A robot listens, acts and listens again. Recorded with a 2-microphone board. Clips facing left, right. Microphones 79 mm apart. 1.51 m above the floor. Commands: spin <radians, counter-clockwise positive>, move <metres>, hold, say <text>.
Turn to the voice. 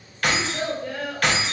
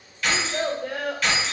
spin -1.13
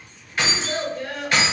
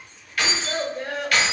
spin -0.52
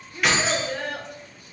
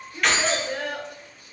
spin -0.17
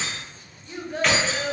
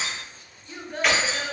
say Facing the child speaking.